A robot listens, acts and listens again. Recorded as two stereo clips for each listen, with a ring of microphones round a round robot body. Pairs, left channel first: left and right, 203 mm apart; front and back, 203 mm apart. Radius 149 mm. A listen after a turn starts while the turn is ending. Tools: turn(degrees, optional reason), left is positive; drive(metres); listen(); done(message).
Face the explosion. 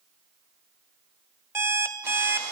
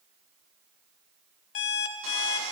listen()
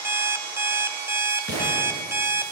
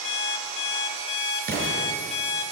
turn(degrees=140, reason="The explosion: 140° left.")
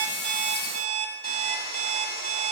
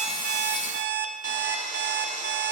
done("I heard an explosion from this way, but can't make it out now.")